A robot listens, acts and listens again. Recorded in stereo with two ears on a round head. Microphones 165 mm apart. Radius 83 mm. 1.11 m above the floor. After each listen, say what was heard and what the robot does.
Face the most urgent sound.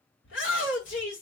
The shout: about 70° left or 110° left. Turn 70° left.
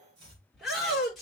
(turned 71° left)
Facing the shout.